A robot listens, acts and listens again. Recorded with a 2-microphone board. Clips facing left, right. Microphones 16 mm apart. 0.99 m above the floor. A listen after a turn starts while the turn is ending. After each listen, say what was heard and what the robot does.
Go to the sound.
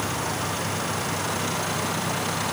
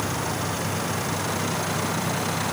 Keep listening.
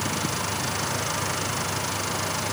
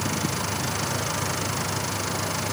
Keep listening.
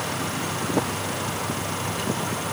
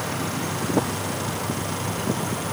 I can't make out anything to turn to.